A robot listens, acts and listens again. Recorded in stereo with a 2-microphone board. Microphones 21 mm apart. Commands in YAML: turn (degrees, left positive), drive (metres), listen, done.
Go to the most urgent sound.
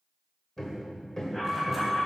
turn: 35
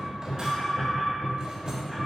drive: 1.0
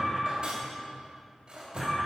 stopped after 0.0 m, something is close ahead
turn: -10
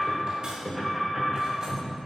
done: "Blocked. The alarm is further on, straight ahead."